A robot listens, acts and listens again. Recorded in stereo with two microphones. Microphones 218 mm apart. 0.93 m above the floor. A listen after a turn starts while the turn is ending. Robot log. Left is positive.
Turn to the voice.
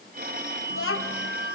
cmd yaw +90
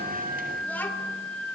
note: So it is at 10° left.
cmd yaw +10
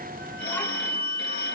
cmd idle
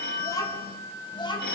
note: The child speaking is now 20° left.
cmd yaw +20
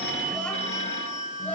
cmd idle
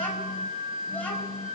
end: Facing the child speaking, over 4 m away.